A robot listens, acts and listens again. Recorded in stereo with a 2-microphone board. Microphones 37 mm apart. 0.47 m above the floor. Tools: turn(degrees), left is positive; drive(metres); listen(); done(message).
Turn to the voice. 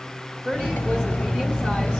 turn(degrees=20)
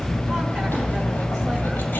listen()
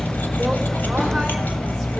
listen()
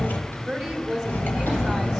done("Facing the woman speaking, 1 to 2 m away.")